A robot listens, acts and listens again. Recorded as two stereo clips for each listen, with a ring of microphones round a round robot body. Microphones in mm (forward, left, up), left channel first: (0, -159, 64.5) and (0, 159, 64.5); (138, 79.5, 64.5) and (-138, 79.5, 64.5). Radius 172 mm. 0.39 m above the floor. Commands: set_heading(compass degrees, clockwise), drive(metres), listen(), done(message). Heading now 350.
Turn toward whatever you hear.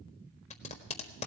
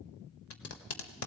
set_heading(15)
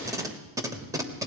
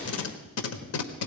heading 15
set_heading(5)
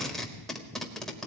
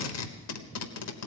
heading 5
done("Facing the tape being pulled.")